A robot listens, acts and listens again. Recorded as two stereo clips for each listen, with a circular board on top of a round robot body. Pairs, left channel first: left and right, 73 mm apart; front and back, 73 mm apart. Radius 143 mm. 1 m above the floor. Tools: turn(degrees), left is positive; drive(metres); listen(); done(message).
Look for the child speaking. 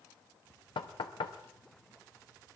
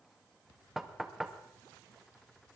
listen()
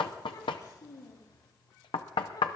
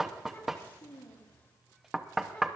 turn(degrees=65)
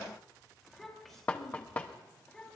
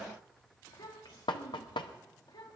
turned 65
turn(degrees=10)
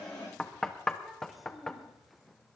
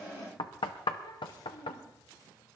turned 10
done("Facing the child speaking, 2 to 4 m away.")